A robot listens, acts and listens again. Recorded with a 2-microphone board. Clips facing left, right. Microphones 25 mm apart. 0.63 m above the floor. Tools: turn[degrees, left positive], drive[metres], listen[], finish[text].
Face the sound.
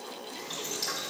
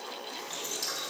Thought: The boiling: about 35° left or 145° left.
Action: turn[35]
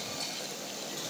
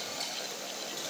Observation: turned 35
Action: finish[Found it: boiling, straight ahead.]